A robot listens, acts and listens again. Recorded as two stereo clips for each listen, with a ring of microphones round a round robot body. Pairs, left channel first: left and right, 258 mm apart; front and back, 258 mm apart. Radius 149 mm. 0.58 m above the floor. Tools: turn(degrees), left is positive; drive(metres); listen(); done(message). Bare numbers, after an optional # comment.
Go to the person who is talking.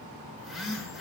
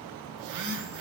listen()
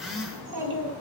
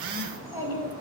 # The child speaking: 100° right.
turn(-100)
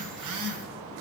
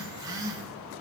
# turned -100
listen()
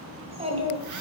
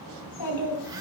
# The child speaking is now 25° right.
turn(-25)
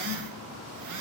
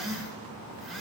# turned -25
listen()
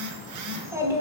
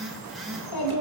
# The child speaking is now 10° right.
turn(-10)
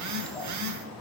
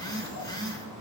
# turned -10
drive(1.0)
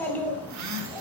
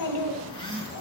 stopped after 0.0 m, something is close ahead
done("Blocked. The child speaking is further on, straight ahead.")